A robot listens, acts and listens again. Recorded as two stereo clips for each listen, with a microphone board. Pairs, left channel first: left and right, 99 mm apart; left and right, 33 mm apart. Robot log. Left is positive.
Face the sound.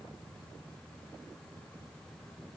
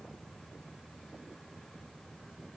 cmd idle
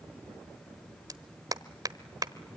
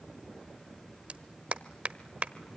note: The clap: about 40° right or 140° right.
cmd yaw -40
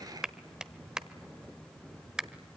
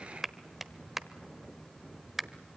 note: So it is at 10° right.
cmd yaw -10
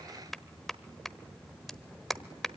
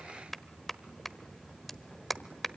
end: Facing the clap.